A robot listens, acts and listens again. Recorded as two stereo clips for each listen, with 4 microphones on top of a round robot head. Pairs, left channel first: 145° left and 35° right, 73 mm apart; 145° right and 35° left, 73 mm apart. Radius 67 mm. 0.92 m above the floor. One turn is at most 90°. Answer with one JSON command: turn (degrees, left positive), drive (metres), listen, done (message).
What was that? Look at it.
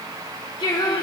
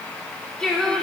{"turn": 90}
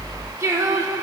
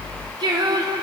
{"turn": 15}
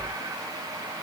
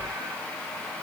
{"listen": true}
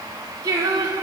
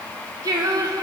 {"done": "Found it: singing, straight ahead."}